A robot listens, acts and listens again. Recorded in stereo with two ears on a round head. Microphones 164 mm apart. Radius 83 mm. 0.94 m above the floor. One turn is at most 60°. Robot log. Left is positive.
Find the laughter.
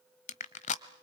cmd idle
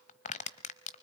cmd idle
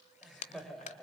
cmd yaw +30
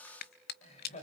note: So it is at 140° left.
cmd yaw +60
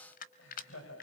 note: The laughter is now 85° left.
cmd yaw +60
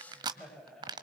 end: Found it: laughter, straight ahead, over 4 m away.